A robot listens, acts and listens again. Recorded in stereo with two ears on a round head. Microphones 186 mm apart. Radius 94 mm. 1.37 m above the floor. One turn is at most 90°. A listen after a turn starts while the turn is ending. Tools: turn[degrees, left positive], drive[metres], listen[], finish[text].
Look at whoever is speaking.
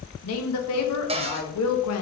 Action: turn[90]
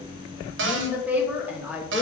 Action: finish[Found it: a woman speaking, straight ahead, 1 to 2 m away.]